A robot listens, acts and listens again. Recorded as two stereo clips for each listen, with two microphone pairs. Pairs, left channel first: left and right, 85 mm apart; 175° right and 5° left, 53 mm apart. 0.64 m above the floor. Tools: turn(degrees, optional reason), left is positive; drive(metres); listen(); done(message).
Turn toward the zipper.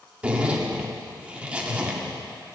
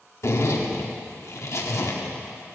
turn(degrees=-170, reason="The zipper: 170° right.")
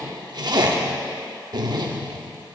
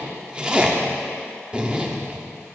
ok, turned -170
turn(degrees=-65, reason="The zipper is now 65° right.")
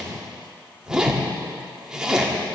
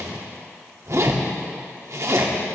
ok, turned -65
turn(degrees=-10, reason="The zipper is now 10° right.")
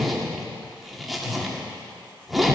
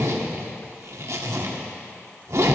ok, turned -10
done("Found it: a zipper, straight ahead.")